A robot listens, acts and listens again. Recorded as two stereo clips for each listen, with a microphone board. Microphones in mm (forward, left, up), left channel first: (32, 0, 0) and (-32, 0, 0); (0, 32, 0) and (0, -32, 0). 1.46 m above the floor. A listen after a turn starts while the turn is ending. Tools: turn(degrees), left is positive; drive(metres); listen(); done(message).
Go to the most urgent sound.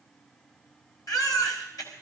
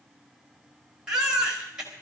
turn(degrees=-15)
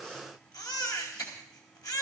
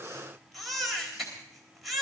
drive(metres=1.0)
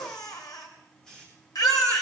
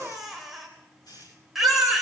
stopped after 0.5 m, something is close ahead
done("Something is in my way. I am facing the baby crying but have not reached it.")